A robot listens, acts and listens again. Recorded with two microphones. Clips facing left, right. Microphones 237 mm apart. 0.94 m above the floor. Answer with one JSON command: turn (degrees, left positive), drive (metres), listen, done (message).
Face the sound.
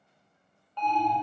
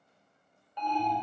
{"turn": -30}
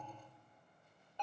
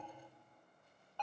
{"turn": 15}
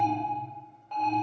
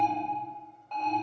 {"done": "Facing the alarm, 1 to 2 m away."}